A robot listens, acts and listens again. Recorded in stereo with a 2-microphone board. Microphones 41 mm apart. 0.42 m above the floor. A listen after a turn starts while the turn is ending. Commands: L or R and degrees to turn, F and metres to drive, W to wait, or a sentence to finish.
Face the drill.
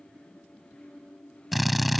L30
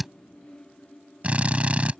R35
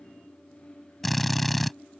Facing the drill.